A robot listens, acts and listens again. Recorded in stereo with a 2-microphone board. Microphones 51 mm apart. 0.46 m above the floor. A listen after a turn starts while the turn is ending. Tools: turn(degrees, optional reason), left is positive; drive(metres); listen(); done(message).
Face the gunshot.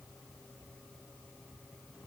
listen()
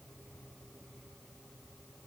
listen()
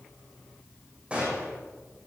turn(degrees=-25, reason="The gunshot: about 25° right or 155° right.")
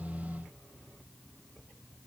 listen()
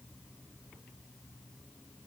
done("I heard a gunshot, but can't make it out now. It was about straight ahead or 130° right.")